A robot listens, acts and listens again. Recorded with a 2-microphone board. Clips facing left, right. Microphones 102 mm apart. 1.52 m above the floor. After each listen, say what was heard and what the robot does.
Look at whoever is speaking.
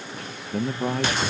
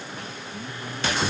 The man speaking: about 75° left or 105° left. Turn 75° left.
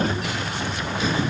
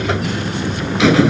Keep listening.
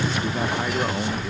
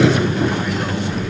Keep listening.
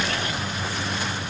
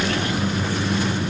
I heard a man speaking, but can't make it out now. It was about straight ahead or 30° left.